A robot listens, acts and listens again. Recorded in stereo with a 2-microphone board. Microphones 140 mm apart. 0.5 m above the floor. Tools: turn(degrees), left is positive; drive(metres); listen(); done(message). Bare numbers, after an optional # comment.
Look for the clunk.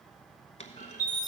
# The clunk: about 55° left or 125° left.
turn(55)
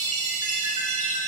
listen()
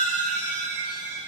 done("I heard a clunk, but can't make it out now. It was about straight ahead or 70° left.")